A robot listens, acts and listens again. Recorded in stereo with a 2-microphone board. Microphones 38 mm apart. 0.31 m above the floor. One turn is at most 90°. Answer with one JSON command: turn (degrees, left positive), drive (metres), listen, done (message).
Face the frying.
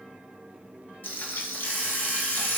{"turn": 90}
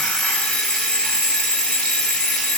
{"listen": true}
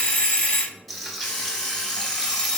{"done": "Found it: frying, straight ahead, under 1 m away."}